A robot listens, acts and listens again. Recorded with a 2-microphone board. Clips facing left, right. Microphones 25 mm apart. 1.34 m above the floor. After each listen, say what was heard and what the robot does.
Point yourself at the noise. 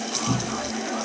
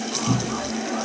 The cupboard door: about 20° right or 160° right. Turn 20° right.
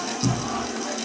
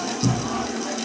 Facing the cupboard door.